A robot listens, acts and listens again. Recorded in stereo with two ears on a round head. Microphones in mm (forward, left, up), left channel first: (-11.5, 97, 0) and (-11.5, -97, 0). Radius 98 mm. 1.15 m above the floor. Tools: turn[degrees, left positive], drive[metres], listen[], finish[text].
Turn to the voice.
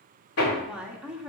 Action: turn[-30]
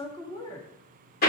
Thought: So it is at 25° left.
Action: turn[25]
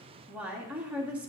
Action: finish[Found it: a woman speaking, straight ahead, 1 to 2 m away.]